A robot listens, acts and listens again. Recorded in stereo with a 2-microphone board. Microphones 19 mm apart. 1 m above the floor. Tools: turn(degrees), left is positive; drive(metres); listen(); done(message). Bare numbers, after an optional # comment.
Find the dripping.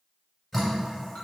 turn(30)
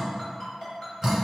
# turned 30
# So it is at 25° right.
turn(-25)
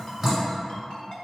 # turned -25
done("Found it: dripping, straight ahead, 1 to 2 m away.")